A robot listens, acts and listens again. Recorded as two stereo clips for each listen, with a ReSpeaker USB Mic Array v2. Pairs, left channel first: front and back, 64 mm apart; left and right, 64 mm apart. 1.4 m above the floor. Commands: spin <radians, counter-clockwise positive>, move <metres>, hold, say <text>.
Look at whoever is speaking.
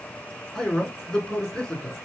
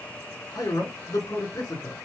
spin 1.40
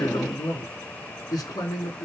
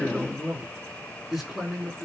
say Found it: a man speaking, straight ahead.